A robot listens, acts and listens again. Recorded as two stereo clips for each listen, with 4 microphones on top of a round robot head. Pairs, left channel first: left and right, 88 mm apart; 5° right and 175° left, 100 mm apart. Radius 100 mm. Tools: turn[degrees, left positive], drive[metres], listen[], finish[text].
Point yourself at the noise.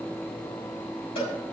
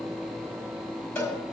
Thought: The cowbell: 60° left.
Action: turn[60]
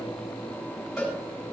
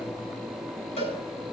Action: finish[Facing the cowbell, over 4 m away.]